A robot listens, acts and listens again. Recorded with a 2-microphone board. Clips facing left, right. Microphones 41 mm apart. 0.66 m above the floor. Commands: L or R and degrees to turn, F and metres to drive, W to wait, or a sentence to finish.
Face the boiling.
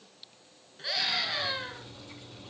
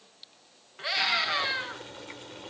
R65
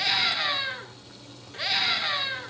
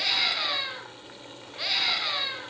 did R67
R45
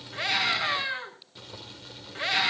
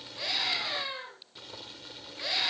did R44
Found it: boiling, straight ahead.